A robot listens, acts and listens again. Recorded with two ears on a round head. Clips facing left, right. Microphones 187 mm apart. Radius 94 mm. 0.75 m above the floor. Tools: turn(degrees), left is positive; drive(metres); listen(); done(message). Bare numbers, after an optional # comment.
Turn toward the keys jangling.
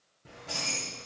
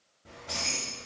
# The keys jangling: about 30° left or 150° left.
turn(30)
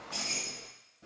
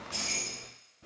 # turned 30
# So it is at 10° left.
turn(10)
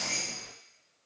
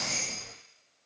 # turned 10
done("Found it: keys jangling, straight ahead, 2 to 4 m away.")